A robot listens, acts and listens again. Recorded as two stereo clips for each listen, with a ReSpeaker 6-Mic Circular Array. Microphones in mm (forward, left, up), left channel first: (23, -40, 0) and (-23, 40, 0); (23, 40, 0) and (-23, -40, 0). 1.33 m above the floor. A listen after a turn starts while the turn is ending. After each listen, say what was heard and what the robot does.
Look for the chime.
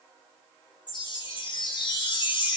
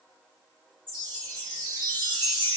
The chime: 95° right. Turn 95° right.
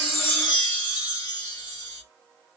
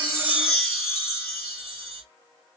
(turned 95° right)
The chime is now 30° right. Turn 30° right.
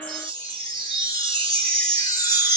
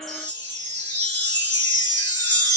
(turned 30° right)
The chime is now 10° right. Turn 10° right.
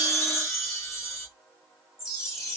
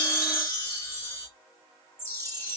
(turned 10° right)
Found it: a chime, straight ahead, 2 to 4 m away.